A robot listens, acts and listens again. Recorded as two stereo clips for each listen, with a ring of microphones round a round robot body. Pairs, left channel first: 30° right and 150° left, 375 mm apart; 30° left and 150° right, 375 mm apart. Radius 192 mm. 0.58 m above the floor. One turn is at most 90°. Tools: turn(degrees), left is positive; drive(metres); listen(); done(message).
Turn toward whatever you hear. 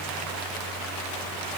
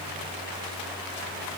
listen()
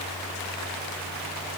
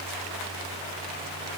listen()
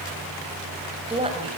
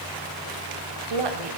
turn(degrees=-90)
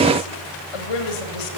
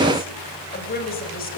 turn(degrees=-35)
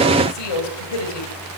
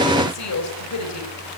turn(degrees=-15)
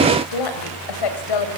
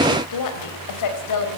turn(degrees=-10)
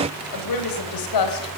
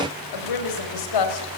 done("Found it: a woman speaking, straight ahead.")